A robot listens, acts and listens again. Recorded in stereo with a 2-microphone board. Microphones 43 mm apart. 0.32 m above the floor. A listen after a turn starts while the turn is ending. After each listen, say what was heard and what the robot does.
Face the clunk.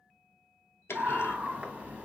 Turn 90° left.
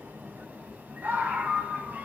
Facing where the clunk came from. I can't hear it now.